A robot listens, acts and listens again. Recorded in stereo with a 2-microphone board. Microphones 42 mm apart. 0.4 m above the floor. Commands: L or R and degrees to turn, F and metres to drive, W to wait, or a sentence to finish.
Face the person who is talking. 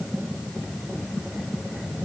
W
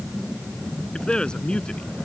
L20
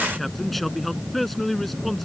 Facing the man speaking.